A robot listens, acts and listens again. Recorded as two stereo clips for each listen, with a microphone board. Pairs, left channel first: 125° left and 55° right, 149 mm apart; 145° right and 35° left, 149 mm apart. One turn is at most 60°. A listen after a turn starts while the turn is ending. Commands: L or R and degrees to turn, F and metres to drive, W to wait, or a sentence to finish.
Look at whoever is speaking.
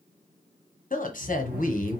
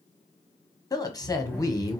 L60
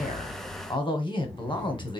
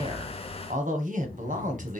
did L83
L60
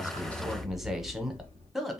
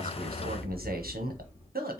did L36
L30
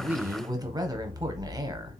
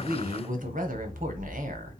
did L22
L10
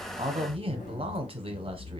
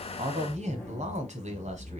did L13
Facing the woman speaking, under 1 m away.